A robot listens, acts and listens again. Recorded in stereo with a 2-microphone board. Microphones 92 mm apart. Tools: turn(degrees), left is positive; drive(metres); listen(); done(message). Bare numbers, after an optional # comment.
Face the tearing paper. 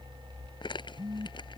# The tearing paper: about 55° left or 125° left.
turn(55)
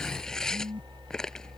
done("Found it: tearing paper, straight ahead.")